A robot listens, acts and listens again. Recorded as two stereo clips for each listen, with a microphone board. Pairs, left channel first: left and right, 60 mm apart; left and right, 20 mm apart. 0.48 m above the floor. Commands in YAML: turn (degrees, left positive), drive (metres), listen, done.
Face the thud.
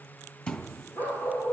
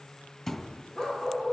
turn: 20
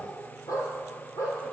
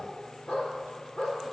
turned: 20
listen: true
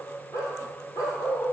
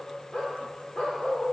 done: "I heard a thud, but can't make it out now. It was about straight ahead or 140° left."